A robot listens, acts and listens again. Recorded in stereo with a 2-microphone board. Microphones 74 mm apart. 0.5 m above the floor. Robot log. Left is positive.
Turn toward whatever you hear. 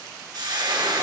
note: The frying: about 70° right or 110° right.
cmd yaw -70
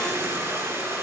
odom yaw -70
note: So it is at 35° right.
cmd yaw -35
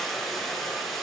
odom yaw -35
end: Facing the frying.